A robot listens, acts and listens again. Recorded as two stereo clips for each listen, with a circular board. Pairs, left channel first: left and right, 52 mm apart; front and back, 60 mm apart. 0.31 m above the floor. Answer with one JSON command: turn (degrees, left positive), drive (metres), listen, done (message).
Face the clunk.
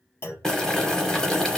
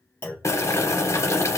{"turn": 50}
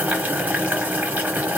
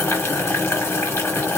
{"done": "Facing where the clunk came from. I can't hear it now."}